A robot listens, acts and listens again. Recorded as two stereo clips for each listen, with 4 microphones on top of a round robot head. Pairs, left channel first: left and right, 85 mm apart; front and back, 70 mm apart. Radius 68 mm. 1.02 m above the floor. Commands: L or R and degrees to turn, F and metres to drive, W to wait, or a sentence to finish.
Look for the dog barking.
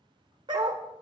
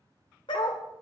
R40
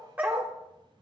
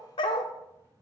R20
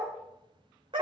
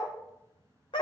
R40
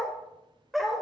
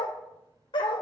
Facing the dog barking, 1 to 2 m away.